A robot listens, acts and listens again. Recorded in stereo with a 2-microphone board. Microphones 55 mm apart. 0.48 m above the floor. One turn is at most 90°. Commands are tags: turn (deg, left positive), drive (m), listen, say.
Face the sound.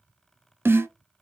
<turn deg="-45"/>
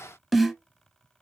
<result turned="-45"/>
<say>Facing the snare drum.</say>